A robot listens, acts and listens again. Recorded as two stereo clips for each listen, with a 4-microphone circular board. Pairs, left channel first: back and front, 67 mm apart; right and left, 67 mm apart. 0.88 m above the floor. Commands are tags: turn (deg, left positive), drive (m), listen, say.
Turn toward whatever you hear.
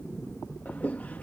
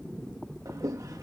<turn deg="115"/>
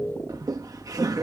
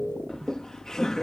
<turn deg="-10"/>
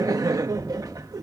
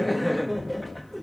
<say>Facing the laughter.</say>